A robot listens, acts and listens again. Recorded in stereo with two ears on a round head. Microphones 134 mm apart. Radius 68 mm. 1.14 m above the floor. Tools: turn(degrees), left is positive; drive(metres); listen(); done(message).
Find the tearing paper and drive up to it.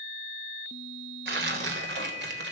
turn(degrees=-90)
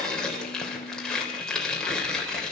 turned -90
drive(metres=1.0)
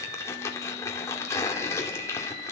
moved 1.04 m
turn(degrees=20)
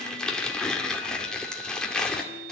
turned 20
drive(metres=1.0)
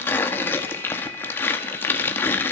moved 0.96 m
turn(degrees=15)
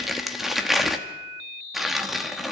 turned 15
drive(metres=1.0)
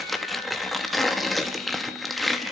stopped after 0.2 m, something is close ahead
done("Arrived at the tearing paper, straight ahead.")